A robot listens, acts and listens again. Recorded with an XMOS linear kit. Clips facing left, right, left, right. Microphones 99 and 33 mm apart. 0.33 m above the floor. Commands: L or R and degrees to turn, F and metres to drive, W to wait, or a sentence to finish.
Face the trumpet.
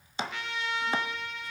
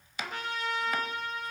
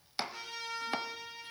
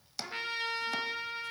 R40
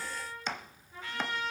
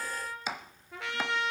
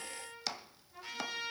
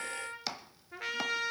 R95
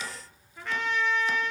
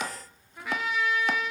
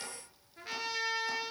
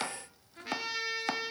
R10
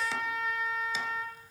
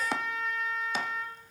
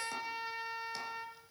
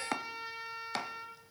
Facing the trumpet, 2 to 4 m away.